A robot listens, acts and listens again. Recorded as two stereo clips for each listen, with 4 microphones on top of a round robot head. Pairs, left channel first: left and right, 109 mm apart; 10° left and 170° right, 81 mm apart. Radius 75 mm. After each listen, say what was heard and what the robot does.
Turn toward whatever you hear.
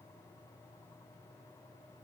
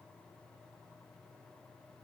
Keep listening.
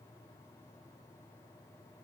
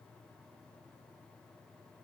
Keep listening.
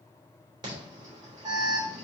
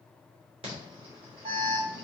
The alarm: 150° right. Turn 150° right.
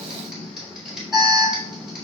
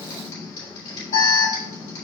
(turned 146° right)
Found it: an alarm, straight ahead.